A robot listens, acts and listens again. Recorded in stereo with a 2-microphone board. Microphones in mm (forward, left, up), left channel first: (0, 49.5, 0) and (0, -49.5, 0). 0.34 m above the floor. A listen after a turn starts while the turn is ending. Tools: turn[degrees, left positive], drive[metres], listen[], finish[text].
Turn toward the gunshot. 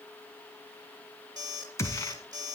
Thought: The gunshot: about 30° left or 150° left.
Action: turn[30]
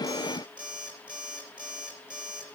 Action: listen[]
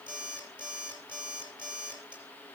Action: finish[I heard a gunshot, but can't make it out now. It was about straight ahead or 120° left.]